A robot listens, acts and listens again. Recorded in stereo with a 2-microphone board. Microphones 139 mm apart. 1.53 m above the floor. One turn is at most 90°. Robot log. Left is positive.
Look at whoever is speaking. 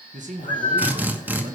note: The man speaking: about 65° right or 115° right.
cmd yaw -65
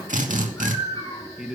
end: Facing the man speaking.